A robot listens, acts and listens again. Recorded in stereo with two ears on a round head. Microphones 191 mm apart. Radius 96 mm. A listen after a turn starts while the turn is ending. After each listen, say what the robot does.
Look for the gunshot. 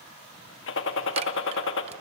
Turn 60° left.
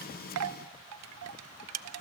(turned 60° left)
Keep listening.
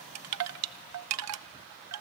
I heard a gunshot, but can't make it out now. It was about straight ahead or 60° left.